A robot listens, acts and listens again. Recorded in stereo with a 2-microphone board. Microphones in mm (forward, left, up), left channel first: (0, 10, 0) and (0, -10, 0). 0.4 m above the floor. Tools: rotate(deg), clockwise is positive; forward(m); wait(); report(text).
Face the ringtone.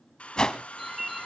rotate(30)
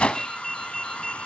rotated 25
rotate(-10)
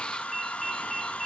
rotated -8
report("Facing the ringtone.")